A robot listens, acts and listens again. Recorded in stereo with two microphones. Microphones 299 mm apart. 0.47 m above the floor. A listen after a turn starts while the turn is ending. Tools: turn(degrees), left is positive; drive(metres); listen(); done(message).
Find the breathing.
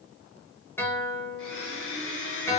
listen()
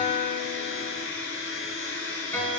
listen()
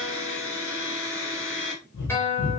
turn(degrees=75)
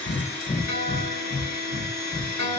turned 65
turn(degrees=15)
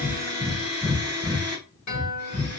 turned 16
done("Facing the breathing.")